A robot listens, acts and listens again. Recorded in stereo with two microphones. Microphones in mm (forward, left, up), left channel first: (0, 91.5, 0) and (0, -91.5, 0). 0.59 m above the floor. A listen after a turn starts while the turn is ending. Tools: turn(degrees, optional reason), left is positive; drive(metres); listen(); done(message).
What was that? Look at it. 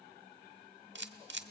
turn(degrees=-90)
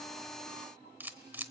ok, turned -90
turn(degrees=-10, reason="So it is at 10° right.")
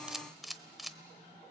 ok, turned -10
done("Found it: a camera shutter, straight ahead, under 1 m away.")